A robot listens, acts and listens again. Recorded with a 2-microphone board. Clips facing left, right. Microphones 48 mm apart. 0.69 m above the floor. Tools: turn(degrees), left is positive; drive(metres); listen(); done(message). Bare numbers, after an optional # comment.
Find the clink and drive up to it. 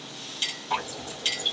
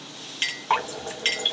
# The clink: about 50° right or 130° right.
turn(-50)
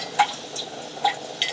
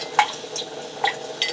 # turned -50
drive(1.0)
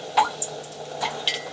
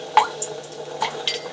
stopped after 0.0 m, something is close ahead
done("Something is in my way. I am facing the clink but have not reached it.")